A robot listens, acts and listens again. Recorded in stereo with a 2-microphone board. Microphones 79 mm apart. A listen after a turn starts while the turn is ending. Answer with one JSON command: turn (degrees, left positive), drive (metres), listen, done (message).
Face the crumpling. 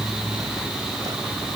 {"listen": true}
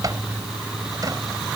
{"listen": true}
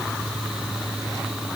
{"done": "I can't make out crumpling."}